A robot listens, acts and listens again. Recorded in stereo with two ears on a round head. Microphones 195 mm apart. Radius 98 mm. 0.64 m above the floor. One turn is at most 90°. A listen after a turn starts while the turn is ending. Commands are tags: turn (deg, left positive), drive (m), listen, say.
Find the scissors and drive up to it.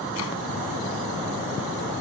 <listen/>
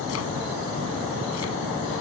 <listen/>
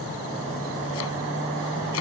<say>I can't make out scissors.</say>